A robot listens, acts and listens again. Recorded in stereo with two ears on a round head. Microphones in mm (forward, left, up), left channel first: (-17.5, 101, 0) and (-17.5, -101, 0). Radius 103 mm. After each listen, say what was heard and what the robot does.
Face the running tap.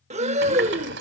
The running tap: about 60° right or 120° right. Turn 60° right.
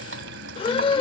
So it is at 55° right. Turn 55° right.
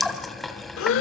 Found it: a running tap, straight ahead.